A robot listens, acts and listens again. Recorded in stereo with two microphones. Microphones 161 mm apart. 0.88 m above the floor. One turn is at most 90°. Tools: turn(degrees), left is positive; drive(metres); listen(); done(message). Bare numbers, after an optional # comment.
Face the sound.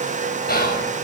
# The whispering: about 75° left or 105° left.
turn(75)
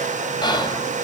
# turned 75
# So it is at 30° left.
turn(30)
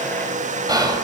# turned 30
# The whispering is now 25° right.
turn(-25)
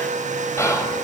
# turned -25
# The whispering is now 20° left.
turn(20)
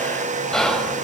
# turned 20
done("Facing the whispering, over 4 m away.")